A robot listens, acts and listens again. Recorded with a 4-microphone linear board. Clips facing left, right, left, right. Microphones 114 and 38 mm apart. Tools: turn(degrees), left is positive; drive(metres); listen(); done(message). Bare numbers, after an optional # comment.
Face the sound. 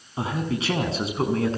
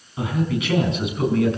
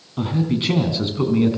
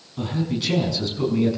# The man speaking: about 35° left or 145° left.
turn(35)
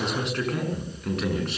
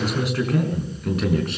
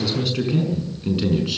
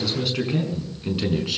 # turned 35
done("Found it: a man speaking, straight ahead, over 4 m away.")